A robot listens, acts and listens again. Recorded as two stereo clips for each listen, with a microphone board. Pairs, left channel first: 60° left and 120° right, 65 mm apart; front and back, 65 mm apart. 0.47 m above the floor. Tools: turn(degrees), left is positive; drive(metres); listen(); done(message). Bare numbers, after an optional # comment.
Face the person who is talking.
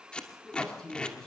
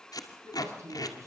# The man speaking: 140° left.
turn(140)
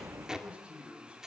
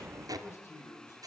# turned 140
# The man speaking is now 45° right.
turn(-45)
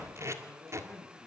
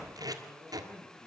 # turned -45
# The man speaking is now 10° right.
turn(-10)
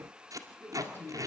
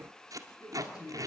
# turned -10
done("Facing the man speaking.")